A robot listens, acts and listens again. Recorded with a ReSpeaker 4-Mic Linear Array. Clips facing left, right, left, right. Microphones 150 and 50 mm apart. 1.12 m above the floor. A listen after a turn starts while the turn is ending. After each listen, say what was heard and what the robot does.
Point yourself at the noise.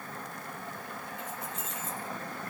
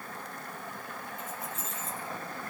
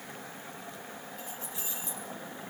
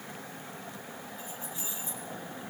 The keys jangling: about 65° left or 115° left. Turn 65° left.
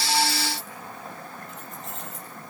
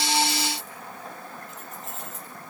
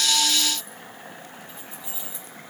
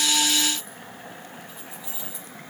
Found it: keys jangling, straight ahead.